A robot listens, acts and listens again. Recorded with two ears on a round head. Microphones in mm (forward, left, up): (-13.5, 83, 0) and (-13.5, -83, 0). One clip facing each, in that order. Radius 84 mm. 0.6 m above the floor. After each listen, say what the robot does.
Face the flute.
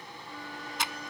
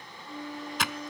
Turn 20° right.
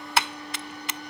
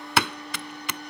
Facing the flute.